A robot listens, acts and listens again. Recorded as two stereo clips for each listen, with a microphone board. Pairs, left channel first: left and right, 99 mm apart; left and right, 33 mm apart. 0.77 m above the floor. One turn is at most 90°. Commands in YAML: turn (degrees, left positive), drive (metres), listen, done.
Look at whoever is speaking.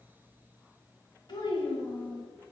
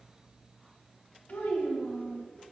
turn: 45
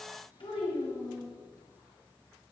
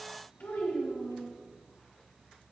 turn: 80
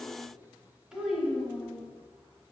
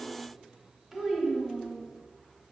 turn: -10
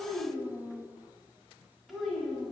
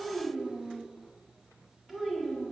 done: "Found it: a child speaking, straight ahead."